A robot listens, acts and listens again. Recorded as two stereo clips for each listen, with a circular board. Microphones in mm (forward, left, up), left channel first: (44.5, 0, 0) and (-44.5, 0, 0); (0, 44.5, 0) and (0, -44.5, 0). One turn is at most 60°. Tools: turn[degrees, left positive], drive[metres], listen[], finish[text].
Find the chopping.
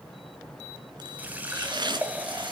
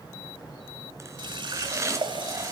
Thought: The chopping: 145° right.
Action: turn[-60]
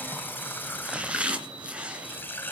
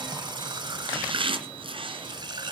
Thought: The chopping is now 105° right.
Action: turn[-60]
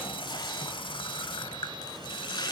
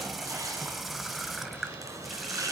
Thought: Nothing new. It was at 45° right.
Action: turn[-45]
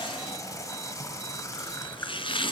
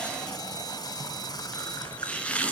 Thought: The chopping is now 15° left.
Action: turn[15]
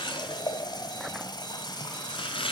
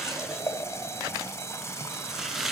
Action: finish[Facing the chopping, 2 to 4 m away.]